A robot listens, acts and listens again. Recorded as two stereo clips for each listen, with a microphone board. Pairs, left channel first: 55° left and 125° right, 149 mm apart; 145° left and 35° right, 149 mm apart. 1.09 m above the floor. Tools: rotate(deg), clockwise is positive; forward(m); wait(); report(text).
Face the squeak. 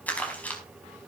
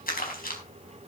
wait()
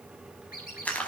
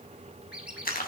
rotate(-50)
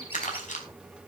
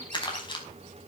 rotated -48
wait()
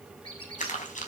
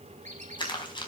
report("Facing the squeak.")